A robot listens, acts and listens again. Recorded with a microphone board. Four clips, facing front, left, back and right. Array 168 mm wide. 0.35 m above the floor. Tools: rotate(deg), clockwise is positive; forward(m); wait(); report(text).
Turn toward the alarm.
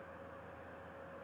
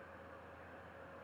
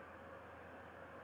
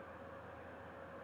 wait()
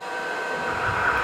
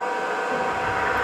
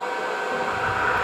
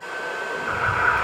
rotate(85)
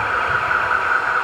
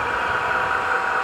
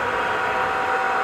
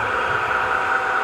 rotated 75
rotate(10)
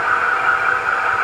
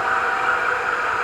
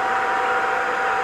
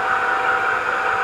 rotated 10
report("Found it: an alarm, straight ahead, 1 to 2 m away.")